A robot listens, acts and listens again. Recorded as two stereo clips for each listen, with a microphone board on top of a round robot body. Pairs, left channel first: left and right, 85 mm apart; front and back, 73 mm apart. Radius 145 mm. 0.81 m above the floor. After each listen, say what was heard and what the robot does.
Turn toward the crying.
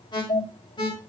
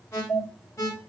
Keep listening.
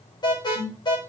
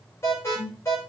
Keep listening.
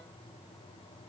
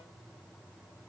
I can't make out crying to turn to.